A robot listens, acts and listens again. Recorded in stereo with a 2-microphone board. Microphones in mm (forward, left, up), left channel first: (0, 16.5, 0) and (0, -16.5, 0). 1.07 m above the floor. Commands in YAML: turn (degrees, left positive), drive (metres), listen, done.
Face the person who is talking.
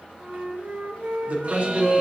turn: -40
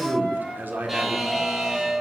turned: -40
turn: -100
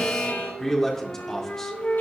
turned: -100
turn: 10
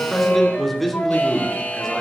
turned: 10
done: "Facing the man speaking."